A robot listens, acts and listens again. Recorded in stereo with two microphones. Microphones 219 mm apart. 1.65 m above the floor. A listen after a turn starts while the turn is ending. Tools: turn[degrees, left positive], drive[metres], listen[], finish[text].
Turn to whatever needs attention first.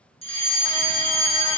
Thought: The fire alarm: about 25° left or 155° left.
Action: turn[25]
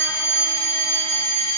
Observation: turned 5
Thought: The fire alarm: about 30° left or 150° left.
Action: turn[30]
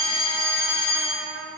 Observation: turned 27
Thought: So it is at 120° left.
Action: turn[120]
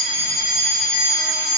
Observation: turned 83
Thought: The fire alarm is now 35° left.
Action: turn[35]
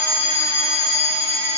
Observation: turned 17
Thought: The fire alarm is now 15° left.
Action: turn[15]
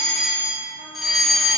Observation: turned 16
Action: finish[Found it: a fire alarm, straight ahead.]